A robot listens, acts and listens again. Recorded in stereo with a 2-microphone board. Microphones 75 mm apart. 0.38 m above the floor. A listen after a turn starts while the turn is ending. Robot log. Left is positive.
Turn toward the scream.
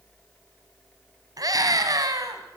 note: The scream: about 55° right or 125° right.
cmd yaw -55
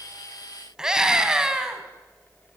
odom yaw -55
note: So it is at 10° right.
cmd yaw -10
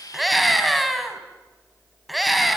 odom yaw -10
end: Found it: a scream, straight ahead, 2 to 4 m away.